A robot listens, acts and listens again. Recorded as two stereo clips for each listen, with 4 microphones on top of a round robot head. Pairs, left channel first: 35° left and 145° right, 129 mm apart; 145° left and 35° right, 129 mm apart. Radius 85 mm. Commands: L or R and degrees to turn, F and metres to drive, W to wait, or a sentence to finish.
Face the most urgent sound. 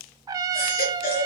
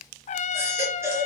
L35
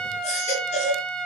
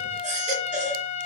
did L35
Found it: a baby crying, straight ahead, 2 to 4 m away.